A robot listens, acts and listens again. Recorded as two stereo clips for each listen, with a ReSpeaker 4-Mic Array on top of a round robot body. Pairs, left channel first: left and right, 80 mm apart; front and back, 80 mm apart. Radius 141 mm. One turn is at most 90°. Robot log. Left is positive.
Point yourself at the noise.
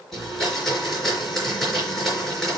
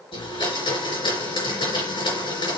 end: Facing the blender.